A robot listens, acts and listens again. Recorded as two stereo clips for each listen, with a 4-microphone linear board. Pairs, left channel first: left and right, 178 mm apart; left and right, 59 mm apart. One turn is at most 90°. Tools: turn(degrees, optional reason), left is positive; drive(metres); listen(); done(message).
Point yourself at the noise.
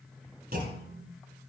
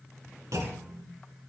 turn(degrees=-65, reason="The clunk: about 65° right or 115° right.")
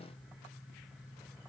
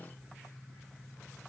listen()
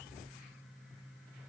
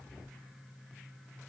done("I heard a clunk, but can't make it out now. It was about straight ahead or 50° right.")